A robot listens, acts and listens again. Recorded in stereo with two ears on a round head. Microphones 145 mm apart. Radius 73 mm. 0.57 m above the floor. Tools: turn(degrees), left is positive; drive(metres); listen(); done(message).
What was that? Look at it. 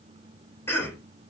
turn(degrees=15)
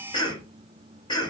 turn(degrees=150)
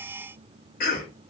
turn(degrees=65)
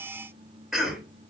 done("Found it: a cough, straight ahead.")